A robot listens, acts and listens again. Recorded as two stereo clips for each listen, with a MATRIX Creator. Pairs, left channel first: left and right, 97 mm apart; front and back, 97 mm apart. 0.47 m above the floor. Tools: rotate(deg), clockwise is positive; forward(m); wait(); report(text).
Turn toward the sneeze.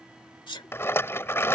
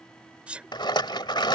rotate(-105)
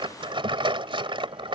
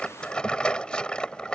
report("I heard a sneeze from this way, but can't make it out now.")